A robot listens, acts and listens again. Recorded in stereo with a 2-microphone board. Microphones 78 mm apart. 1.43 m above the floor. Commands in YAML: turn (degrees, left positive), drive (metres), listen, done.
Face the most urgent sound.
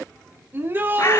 turn: -30
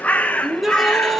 done: "Facing the shout."